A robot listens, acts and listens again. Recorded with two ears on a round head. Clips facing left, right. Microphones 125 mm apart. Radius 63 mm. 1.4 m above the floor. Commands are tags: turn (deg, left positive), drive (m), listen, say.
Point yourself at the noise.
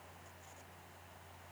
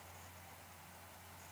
<listen/>
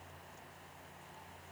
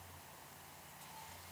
<listen/>
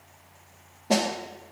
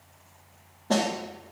<turn deg="30"/>
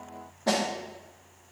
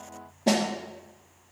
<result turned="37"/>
<turn deg="-25"/>
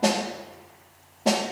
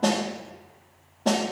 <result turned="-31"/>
<turn deg="10"/>
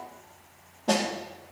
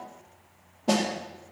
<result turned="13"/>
<say>Facing the snare drum.</say>